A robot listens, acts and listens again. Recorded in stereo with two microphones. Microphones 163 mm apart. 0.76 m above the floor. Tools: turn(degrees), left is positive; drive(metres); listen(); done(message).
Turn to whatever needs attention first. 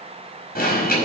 turn(degrees=65)
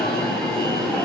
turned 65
done("Facing the alarm.")